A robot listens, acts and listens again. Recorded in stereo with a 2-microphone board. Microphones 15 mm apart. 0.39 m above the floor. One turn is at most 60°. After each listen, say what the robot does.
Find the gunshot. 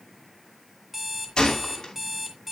Turn 50° left.
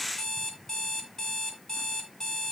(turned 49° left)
Keep listening.
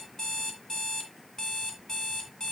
I heard a gunshot, but can't make it out now. It was about straight ahead or 80° left.